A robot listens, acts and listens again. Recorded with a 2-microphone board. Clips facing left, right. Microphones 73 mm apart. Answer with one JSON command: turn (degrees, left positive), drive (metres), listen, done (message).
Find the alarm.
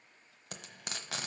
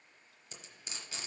{"listen": true}
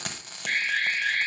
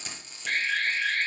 {"turn": 30}
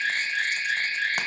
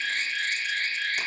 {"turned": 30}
{"turn": 150}
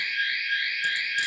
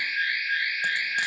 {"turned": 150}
{"turn": -30}
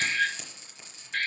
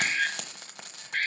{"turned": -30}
{"turn": -10}
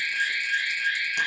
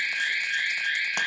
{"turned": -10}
{"done": "Found it: an alarm, straight ahead."}